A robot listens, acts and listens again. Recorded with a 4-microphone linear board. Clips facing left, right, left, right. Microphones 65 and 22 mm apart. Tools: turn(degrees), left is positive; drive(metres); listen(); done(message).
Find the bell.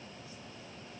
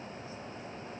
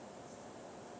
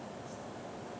listen()
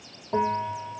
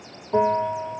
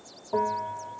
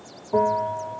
turn(degrees=25)
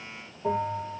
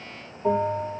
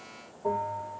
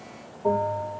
done("Facing the bell.")